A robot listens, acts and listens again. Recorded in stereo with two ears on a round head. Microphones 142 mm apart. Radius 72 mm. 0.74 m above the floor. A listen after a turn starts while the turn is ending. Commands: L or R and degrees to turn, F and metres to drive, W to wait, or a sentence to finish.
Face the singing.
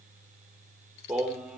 R30
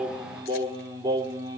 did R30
R155
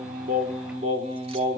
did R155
R45
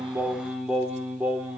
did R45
R10
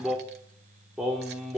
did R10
Facing the singing, 2 to 4 m away.